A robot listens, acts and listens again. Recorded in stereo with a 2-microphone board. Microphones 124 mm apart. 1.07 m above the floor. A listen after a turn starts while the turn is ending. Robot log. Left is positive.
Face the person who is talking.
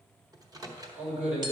cmd yaw -90
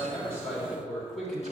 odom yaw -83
end: Found it: a man speaking, straight ahead, 2 to 4 m away.